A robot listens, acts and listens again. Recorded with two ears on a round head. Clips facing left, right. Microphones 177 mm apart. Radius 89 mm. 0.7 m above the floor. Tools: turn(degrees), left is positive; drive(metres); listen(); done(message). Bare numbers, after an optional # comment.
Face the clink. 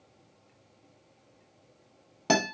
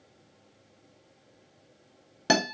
listen()
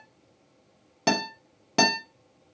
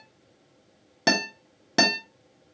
listen()
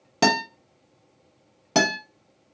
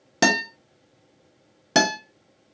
done("I can't make out a clink to turn to.")